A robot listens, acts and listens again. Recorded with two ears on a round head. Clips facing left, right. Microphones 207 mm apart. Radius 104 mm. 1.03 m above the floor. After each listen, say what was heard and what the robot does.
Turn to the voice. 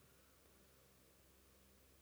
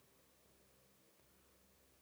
Keep listening.
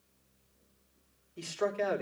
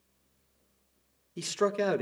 The man speaking: about 60° right or 120° right. Turn 60° right.
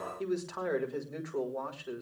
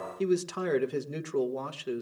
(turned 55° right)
So it is at 50° right. Turn 50° right.
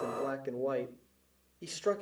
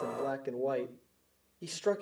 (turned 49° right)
Found it: a man speaking, straight ahead.